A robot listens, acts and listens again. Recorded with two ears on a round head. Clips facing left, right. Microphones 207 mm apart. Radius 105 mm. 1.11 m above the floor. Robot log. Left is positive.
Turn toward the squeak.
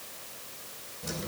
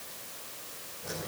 cmd idle
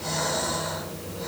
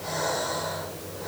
cmd idle
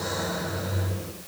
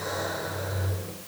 end: I can't make out a squeak to turn to.